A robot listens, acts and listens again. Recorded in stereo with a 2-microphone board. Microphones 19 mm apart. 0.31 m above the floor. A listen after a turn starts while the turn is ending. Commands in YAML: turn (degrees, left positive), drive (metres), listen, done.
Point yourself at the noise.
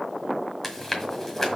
turn: 20
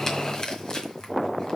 turn: 135
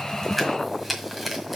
turn: -10
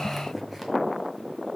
listen: true
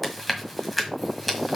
done: "Facing the chewing, 1 to 2 m away."